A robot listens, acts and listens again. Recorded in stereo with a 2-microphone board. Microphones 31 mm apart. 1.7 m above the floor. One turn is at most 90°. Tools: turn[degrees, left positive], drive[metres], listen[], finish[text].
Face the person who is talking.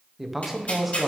Action: turn[-30]
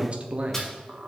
Thought: So it is at 140° right.
Action: turn[-90]
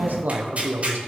Thought: The man speaking is now 75° right.
Action: turn[-75]
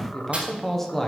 Thought: The man speaking is now 10° left.
Action: turn[10]
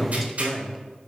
Action: finish[Facing the man speaking, 1 to 2 m away.]